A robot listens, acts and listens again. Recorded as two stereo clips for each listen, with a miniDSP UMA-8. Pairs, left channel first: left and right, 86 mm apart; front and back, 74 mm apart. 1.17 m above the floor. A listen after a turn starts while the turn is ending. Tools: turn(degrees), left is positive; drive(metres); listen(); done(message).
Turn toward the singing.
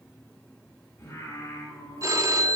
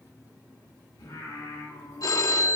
turn(degrees=35)
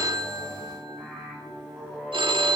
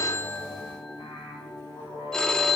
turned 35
done("Facing the singing.")